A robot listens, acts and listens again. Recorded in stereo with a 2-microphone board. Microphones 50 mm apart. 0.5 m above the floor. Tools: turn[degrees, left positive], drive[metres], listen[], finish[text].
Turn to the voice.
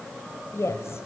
Thought: The woman speaking: about 65° left or 115° left.
Action: turn[65]
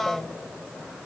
Action: finish[Found it: a woman speaking, straight ahead.]